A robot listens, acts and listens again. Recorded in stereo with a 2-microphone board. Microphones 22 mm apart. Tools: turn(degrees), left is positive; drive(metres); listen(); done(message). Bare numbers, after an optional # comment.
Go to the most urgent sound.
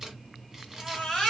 # The baby crying: about 30° left or 150° left.
turn(30)
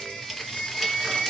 # So it is at 115° left.
turn(115)
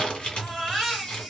drive(1.0)
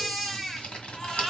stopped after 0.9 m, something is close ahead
# The baby crying is now 10° left.
turn(10)
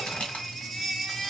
done("Arrived at the baby crying, straight ahead.")